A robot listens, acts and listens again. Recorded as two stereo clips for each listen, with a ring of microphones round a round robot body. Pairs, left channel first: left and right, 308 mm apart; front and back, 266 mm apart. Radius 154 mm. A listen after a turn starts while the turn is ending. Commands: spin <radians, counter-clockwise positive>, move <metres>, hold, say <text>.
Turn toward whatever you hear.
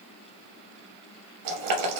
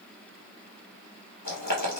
spin -1.05
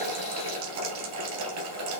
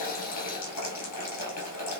spin -0.70
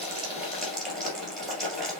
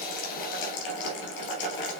say Facing the boiling.